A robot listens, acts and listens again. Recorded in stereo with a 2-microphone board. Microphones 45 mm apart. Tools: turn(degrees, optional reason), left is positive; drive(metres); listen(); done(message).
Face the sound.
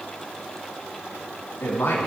turn(degrees=55, reason="The man speaking: about 55° left or 125° left.")
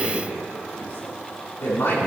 turn(degrees=60, reason="So it is at 60° left.")
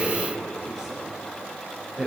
done("Found it: a man speaking, straight ahead, over 4 m away.")